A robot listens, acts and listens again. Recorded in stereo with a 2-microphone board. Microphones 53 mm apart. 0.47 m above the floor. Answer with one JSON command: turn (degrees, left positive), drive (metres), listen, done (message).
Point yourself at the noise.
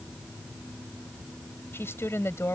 {"turn": 65}
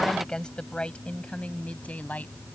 {"turn": 30}
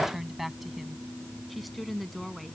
{"done": "Facing the woman speaking."}